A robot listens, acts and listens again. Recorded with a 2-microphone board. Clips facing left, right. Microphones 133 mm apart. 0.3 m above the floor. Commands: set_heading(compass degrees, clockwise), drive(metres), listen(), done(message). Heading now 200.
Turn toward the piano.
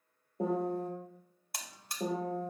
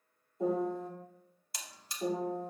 set_heading(135)
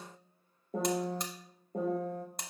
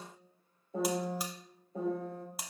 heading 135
set_heading(85)
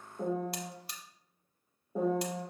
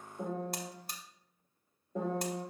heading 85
set_heading(75)
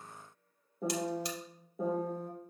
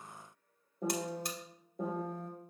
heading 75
done("Facing the piano, 2 to 4 m away.")